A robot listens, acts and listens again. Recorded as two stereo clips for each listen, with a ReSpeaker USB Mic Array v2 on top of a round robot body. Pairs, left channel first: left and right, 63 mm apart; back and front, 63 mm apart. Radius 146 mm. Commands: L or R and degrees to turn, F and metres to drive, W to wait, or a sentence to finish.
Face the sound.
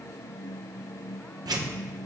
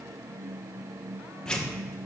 R105
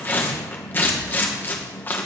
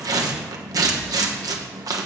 L30
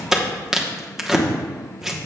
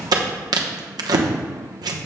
R10
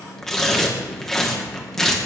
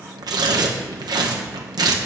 Facing the tearing paper, 1 to 2 m away.